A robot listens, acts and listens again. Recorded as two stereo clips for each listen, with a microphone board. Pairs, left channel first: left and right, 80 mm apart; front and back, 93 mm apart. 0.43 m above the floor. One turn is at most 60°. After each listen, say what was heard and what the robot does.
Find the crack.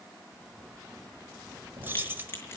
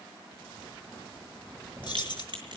The crack: 150° left. Turn 60° left.
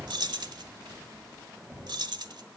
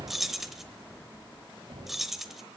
Nothing new. It was at 90° left. Turn 60° left.
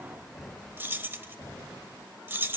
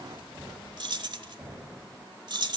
Nothing new. It was at 30° left. Turn 30° left.
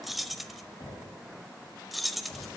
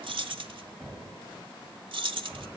Facing where the crack came from. I can't hear it now.